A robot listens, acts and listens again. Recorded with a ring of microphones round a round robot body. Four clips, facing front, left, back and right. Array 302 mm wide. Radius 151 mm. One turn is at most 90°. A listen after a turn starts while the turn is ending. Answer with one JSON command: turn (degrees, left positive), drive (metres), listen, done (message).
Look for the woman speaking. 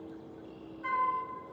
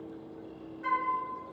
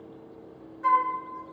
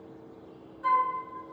{"listen": true}
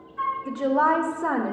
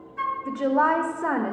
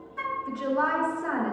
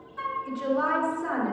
{"turn": 40}
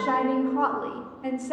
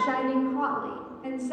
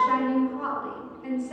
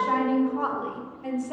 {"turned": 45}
{"done": "Found it: a woman speaking, straight ahead, 1 to 2 m away."}